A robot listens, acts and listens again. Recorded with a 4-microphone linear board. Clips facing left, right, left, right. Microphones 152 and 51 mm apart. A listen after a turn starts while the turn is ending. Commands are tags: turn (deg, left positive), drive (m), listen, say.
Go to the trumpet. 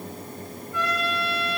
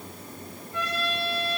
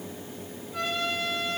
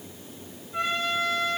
<turn deg="-30"/>
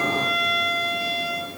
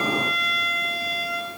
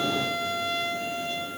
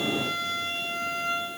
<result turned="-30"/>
<turn deg="-115"/>
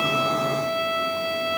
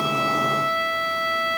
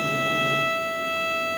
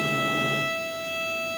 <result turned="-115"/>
<turn deg="15"/>
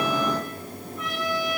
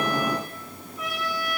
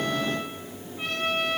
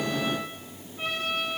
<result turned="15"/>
<drive m="1.0"/>
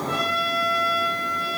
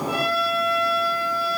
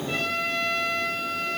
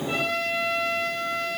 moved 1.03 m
<drive m="1.0"/>
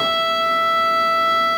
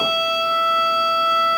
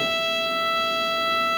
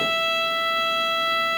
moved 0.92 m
<turn deg="-10"/>
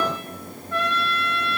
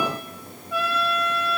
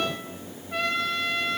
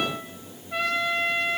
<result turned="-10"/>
<drive m="1.0"/>
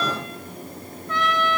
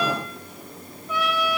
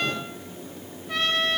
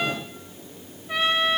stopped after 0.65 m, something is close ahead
<turn deg="-10"/>
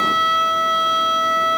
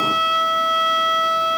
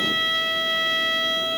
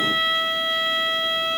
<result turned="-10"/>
<say>Arrived at the trumpet, straight ahead.</say>